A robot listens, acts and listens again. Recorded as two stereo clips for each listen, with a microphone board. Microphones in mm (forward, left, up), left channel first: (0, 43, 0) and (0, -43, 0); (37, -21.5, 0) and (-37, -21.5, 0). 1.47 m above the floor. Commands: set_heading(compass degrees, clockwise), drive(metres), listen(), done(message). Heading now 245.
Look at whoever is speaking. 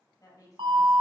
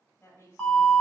set_heading(195)
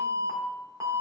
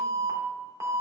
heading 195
listen()
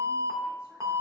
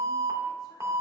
listen()
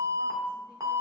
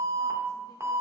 done("I heard a woman speaking from this way, but can't make it out now.")